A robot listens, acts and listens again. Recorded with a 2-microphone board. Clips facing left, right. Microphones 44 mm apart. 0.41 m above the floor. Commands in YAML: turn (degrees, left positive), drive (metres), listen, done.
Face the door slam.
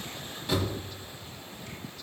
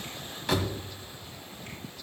turn: -70
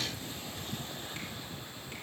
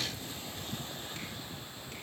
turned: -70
listen: true
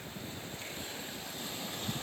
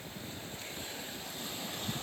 done: "I heard a door slam, but can't make it out now. It was about straight ahead or 40° right."